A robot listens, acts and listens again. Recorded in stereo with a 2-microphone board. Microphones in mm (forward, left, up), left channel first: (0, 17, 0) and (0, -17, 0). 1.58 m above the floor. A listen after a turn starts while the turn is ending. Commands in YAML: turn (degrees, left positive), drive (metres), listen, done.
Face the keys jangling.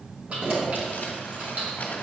turn: -60
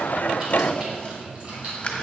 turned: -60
turn: -30
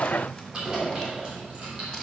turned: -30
turn: -25
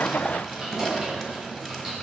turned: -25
turn: -10
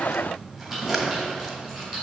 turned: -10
done: "Facing the keys jangling, 2 to 4 m away."